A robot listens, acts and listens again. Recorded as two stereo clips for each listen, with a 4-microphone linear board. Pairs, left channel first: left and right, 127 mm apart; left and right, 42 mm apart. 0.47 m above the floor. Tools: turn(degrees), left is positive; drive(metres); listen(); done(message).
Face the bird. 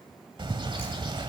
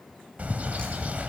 turn(degrees=-40)
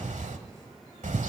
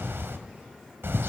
turn(degrees=-95)
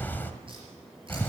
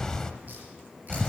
turn(degrees=15)
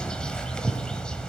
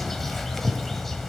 done("Facing the bird.")